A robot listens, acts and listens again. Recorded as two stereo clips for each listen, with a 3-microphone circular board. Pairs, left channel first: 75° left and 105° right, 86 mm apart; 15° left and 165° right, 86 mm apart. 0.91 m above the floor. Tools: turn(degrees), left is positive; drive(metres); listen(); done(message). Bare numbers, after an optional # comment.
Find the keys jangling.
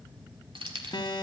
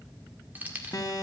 # The keys jangling: 95° right.
turn(-95)
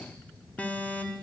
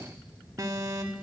listen()
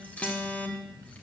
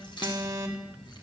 listen()
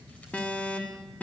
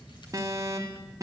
done("Facing where the keys jangling came from. I can't hear it now.")